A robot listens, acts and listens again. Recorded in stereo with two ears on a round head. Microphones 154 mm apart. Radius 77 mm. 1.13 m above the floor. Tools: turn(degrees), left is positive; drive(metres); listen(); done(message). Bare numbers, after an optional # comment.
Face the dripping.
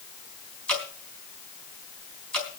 turn(30)
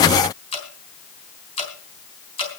# So it is at 145° left.
turn(145)
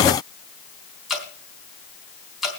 done("Facing the dripping, 2 to 4 m away.")